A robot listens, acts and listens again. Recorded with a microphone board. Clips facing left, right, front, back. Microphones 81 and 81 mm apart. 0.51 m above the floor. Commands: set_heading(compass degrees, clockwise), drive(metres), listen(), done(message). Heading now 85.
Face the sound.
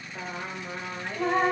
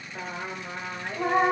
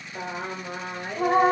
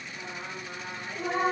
set_heading(100)
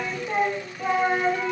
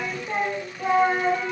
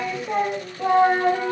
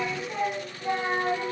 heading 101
done("Facing the singing, 2 to 4 m away.")